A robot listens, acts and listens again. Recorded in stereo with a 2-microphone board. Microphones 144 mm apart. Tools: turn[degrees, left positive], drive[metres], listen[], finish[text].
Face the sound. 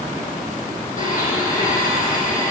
Thought: The blender: about 65° left or 115° left.
Action: turn[65]
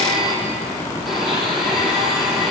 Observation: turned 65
Action: finish[Found it: a blender, straight ahead.]